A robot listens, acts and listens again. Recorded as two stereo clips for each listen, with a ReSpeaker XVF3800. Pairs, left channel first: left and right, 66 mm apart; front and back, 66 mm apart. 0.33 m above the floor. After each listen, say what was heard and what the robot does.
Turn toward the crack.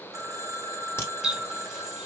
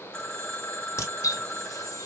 The crack: 40° left. Turn 40° left.
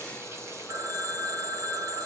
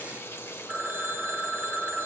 I heard a crack from this way, but can't make it out now.